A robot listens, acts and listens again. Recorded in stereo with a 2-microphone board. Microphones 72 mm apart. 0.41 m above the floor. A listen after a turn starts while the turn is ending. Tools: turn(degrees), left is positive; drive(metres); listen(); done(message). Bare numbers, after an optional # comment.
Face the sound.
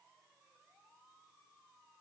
listen()
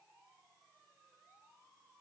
listen()
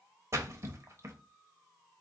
# The splash: about 45° right or 135° right.
turn(-45)
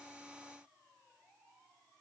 listen()
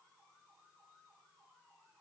done("I heard a splash, but can't make it out now. It was about straight ahead or 90° right.")